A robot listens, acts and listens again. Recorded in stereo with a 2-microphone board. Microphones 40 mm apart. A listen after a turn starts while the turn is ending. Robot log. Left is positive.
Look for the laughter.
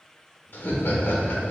note: The laughter: about 70° left or 110° left.
cmd yaw +70
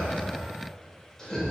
note: So it is at 10° left.
cmd yaw +10
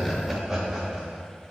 note: The laughter is now 15° right.
cmd yaw -15
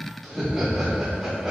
note: The laughter is now 10° right.
cmd yaw -10
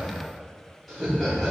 end: Facing the laughter.